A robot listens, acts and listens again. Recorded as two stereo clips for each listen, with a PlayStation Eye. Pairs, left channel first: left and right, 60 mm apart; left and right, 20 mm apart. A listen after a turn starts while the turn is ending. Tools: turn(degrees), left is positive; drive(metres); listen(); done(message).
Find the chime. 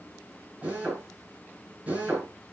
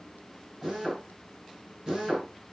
listen()
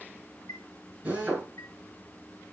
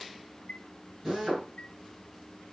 turn(degrees=70)
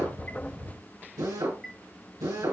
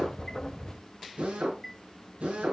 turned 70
done("Facing the chime, 1 to 2 m away.")